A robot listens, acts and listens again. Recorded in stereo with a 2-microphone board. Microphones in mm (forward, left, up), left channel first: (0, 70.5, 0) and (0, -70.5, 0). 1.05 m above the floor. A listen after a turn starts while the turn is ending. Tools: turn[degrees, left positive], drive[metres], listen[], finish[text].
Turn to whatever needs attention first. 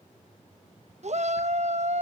Thought: The shout: about 55° right or 125° right.
Action: turn[-55]
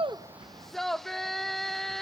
Action: finish[Found it: a shout, straight ahead, under 1 m away.]